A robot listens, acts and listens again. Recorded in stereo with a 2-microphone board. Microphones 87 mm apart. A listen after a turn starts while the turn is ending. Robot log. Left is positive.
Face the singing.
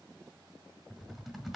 cmd idle
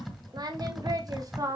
note: The singing: about 40° right or 140° right.
cmd yaw -40
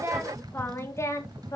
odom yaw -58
note: So it is at 40° left.
cmd yaw +40
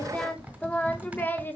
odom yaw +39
note: The singing is now 25° left.
cmd yaw +25
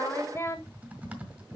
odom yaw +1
note: The singing is now 35° left.
cmd yaw +35
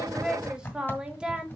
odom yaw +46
note: The singing is now 10° right.
cmd yaw -10
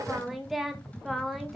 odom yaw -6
end: Facing the singing, 1 to 2 m away.